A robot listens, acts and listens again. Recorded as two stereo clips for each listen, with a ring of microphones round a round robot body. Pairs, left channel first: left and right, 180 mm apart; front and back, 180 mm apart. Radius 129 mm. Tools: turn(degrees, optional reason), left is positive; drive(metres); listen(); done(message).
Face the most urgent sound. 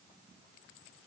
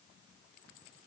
listen()
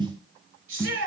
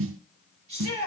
turn(degrees=-115, reason="The shout: 115° right.")
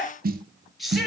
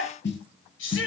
done("Facing the shout, over 4 m away.")